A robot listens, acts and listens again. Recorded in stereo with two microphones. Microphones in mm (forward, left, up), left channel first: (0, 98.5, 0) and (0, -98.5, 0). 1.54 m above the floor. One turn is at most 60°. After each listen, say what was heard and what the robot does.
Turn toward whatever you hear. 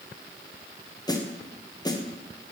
The snare drum: about 20° left or 160° left. Turn 20° left.
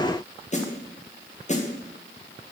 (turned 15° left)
So it is at 145° left. Turn 60° left.
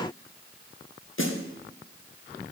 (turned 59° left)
The snare drum is now 85° left. Turn 60° left.
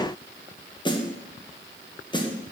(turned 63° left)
The snare drum is now 25° left. Turn 25° left.
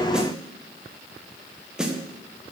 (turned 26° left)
Found it: a snare drum, straight ahead, 1 to 2 m away.